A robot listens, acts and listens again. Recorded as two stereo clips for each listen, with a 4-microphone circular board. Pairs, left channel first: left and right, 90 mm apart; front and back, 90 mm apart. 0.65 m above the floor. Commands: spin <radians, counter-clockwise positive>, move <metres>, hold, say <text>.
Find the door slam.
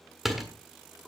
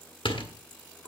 say Found it: a door slam, straight ahead, 1 to 2 m away.